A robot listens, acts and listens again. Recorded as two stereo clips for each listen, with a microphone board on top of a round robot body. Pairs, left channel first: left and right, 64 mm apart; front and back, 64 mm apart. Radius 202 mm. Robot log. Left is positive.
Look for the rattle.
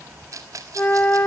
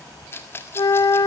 note: The rattle: 55° right.
cmd yaw -55
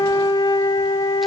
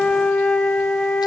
cmd idle
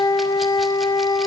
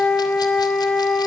cmd idle
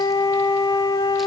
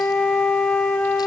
end: I heard a rattle from this way, but can't make it out now.